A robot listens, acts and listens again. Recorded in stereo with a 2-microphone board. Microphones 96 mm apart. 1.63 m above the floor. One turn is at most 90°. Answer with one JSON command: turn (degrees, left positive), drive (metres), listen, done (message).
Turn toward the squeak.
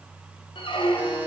{"turn": 60}
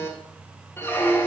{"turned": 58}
{"turn": 25}
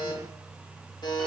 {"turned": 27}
{"listen": true}
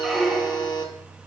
{"done": "Facing the squeak, 1 to 2 m away."}